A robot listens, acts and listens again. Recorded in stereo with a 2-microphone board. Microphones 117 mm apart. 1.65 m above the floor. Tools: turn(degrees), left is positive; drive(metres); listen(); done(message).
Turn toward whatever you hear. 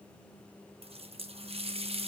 turn(degrees=-60)
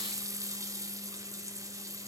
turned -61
turn(degrees=-35)
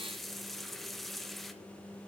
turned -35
done("Facing the running tap, 1 to 2 m away.")